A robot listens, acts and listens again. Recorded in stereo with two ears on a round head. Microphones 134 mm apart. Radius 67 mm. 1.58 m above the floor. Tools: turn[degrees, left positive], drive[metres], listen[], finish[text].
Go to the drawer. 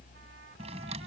Thought: The drawer: about 40° right or 140° right.
Action: turn[-40]
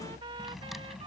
Action: listen[]
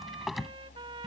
Action: drive[1.0]
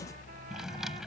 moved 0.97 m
Action: drive[1.0]
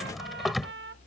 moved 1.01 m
Action: drive[1.0]
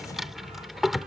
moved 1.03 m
Action: drive[1.0]
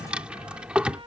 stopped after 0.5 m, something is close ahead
Thought: The drawer is now 10° right.
Action: turn[-10]
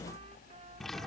Action: finish[Arrived at the drawer, straight ahead.]